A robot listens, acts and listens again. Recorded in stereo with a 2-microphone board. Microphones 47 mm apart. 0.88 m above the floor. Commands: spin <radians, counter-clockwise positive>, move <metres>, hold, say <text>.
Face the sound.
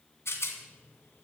spin 1.22
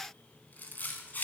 spin 0.70
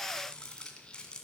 spin 0.35
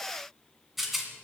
say Found it: a rattle, straight ahead.